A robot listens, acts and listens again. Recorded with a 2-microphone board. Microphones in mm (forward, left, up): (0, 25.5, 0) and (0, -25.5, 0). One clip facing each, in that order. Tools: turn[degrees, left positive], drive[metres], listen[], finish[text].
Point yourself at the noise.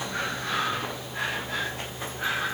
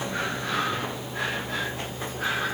Action: listen[]
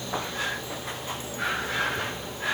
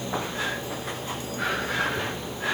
Action: listen[]
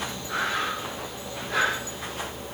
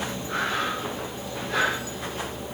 Action: finish[I can't make out anything to turn to.]